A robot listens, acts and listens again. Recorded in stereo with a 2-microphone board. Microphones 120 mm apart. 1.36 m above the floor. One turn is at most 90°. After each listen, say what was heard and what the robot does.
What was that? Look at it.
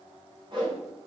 The whoosh: about 45° right or 135° right. Turn 45° right.
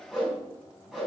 Facing the whoosh, over 4 m away.